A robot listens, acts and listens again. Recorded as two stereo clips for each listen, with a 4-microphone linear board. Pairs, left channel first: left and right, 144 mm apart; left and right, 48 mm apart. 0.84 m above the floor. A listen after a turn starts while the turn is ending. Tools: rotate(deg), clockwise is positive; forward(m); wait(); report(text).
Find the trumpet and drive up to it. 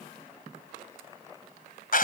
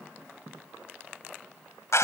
wait()
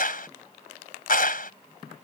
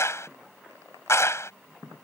wait()
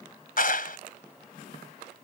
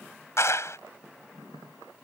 report("I can't make out a trumpet, only a clap.")